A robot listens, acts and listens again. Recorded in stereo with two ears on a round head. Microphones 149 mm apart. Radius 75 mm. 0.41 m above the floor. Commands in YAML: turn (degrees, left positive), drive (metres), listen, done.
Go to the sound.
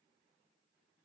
listen: true
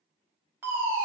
turn: -30
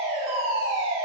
turn: -135
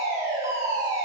turn: -25
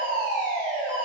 drive: 1.0
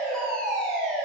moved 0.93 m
drive: 1.0
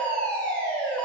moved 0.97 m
turn: 10
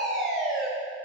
drive: 1.0
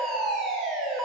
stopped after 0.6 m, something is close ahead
done: "I am next to the fire alarm."